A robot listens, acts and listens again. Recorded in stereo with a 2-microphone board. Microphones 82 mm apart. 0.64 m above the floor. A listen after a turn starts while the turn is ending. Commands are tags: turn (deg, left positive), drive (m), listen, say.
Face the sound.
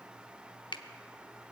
<turn deg="65"/>
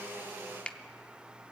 <turn deg="15"/>
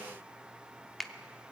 <say>Facing the finger snap, under 1 m away.</say>